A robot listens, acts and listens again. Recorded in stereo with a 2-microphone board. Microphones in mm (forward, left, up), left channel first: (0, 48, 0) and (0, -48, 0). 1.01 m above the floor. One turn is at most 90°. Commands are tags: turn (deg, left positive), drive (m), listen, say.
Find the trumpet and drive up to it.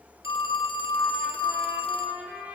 <turn deg="-30"/>
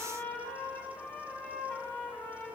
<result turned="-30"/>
<turn deg="20"/>
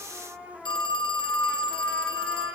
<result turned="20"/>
<drive m="1.0"/>
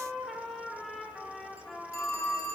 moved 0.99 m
<drive m="1.0"/>
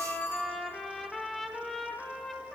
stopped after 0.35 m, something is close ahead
<say>Arrived at the trumpet, straight ahead.</say>